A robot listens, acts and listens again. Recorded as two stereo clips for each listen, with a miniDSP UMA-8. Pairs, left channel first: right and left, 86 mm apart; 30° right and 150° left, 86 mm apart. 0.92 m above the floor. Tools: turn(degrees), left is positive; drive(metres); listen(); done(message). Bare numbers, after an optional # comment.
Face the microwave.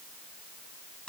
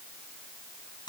listen()
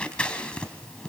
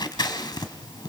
listen()
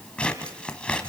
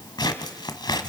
done("I can't make out a microwave, only scissors.")